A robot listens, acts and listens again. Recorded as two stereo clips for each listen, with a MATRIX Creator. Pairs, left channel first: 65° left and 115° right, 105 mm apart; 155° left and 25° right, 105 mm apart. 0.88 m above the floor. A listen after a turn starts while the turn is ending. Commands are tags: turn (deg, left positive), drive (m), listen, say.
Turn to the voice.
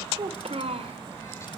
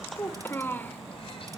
<turn deg="-130"/>
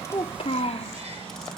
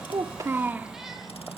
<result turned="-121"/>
<turn deg="55"/>
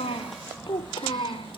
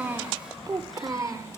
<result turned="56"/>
<turn deg="40"/>
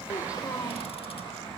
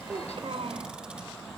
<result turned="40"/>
<say>Facing the child speaking, 2 to 4 m away.</say>